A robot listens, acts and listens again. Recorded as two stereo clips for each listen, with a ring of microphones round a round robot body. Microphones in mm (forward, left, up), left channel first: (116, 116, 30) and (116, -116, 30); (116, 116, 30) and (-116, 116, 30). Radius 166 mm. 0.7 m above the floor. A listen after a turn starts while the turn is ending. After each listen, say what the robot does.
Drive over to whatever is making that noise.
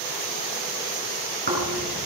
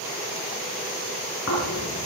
Turn 45° right.
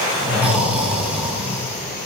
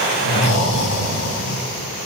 Drive 1.0 m forward.
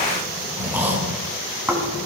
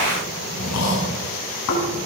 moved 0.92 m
Turn 10° right.
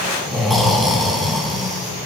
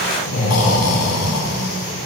Drive 1.0 m forward.
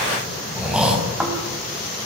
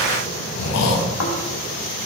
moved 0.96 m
Drive 1.0 m forward.
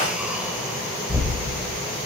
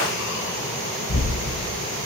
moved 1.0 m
Drive 1.0 m forward.
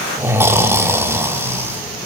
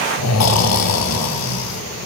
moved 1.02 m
Turn 10° right.
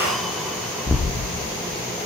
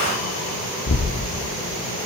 Drive 1.0 m forward.
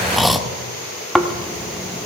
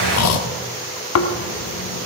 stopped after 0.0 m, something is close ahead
Arrived at the snoring, straight ahead.